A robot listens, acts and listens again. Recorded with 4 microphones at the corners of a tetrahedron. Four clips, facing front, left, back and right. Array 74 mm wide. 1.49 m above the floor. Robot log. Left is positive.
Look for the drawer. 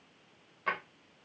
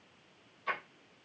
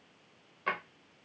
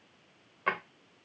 note: The drawer: 90° right.
cmd yaw -90
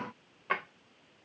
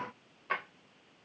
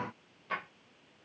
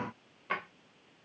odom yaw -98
note: The drawer is now 10° left.
cmd yaw +10
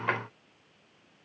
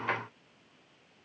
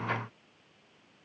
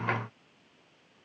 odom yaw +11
end: Found it: a drawer, straight ahead.